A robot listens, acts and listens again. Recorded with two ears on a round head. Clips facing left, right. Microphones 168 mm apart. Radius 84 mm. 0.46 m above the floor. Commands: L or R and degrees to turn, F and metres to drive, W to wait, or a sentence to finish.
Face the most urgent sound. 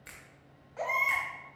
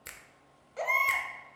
R45
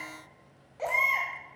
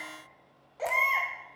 Found it: a baby crying, straight ahead.